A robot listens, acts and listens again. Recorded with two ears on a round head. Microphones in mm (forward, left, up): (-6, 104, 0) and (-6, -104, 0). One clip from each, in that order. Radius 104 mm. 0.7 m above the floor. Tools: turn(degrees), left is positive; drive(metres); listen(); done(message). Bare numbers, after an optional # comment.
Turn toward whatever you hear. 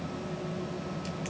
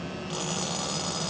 listen()
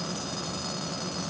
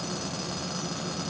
listen()
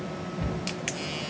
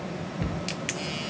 # The cupboard door: about 35° right or 145° right.
turn(-35)
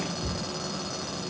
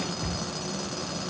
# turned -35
# So it is at 110° right.
turn(-110)
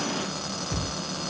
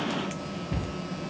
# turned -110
done("Found it: a cupboard door, straight ahead.")